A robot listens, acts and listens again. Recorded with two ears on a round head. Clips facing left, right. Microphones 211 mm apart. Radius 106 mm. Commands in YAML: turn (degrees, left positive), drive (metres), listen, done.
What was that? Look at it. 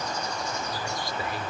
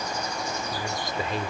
turn: -20
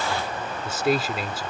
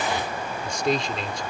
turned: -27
done: "Found it: a man speaking, straight ahead."